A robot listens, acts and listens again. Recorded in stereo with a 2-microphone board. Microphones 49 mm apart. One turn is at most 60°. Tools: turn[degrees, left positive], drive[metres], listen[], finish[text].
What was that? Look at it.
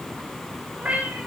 Thought: The cat meowing: about 30° right or 150° right.
Action: turn[-30]
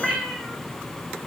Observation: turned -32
Action: finish[Found it: a cat meowing, straight ahead, 2 to 4 m away.]